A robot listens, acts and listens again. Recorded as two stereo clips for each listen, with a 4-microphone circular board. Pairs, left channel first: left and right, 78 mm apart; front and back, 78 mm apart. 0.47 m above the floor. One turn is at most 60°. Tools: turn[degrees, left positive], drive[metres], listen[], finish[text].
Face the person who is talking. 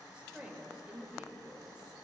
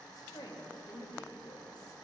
Thought: The woman speaking: 15° right.
Action: turn[-15]
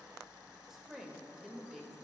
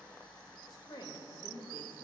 Action: finish[Facing the woman speaking, 1 to 2 m away.]